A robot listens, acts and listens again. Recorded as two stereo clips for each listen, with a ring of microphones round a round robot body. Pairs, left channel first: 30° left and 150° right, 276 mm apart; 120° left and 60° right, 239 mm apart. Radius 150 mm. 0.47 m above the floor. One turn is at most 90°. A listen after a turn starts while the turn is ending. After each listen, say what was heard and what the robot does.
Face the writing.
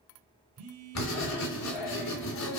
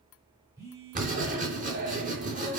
Found it: writing, straight ahead, 2 to 4 m away.